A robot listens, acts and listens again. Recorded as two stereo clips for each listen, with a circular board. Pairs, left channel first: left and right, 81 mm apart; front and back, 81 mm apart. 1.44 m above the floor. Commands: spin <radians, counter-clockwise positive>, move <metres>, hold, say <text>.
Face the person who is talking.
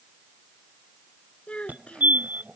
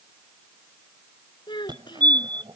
spin 0.26
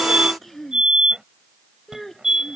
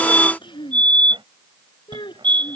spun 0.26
say Found it: a child speaking, straight ahead.